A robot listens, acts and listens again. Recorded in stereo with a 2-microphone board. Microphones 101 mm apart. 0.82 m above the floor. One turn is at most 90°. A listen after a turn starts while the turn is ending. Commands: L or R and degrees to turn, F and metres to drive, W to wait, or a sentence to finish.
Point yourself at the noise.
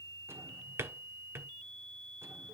R25
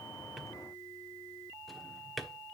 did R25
Facing the drawer, 1 to 2 m away.